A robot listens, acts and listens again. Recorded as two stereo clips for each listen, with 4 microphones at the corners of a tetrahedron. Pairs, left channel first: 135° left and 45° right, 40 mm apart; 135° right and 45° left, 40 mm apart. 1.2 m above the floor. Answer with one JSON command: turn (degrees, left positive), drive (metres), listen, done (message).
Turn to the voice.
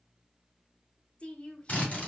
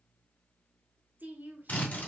{"turn": 75}
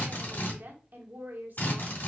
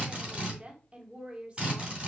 {"turn": -10}
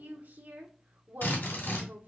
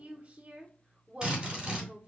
{"done": "Facing the woman speaking."}